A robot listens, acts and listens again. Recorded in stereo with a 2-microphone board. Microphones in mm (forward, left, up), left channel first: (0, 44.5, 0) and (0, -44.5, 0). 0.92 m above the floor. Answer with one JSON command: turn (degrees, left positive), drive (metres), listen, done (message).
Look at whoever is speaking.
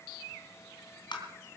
{"listen": true}
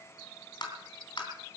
{"listen": true}
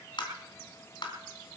{"done": "I can't make out anyone speaking, only tapping."}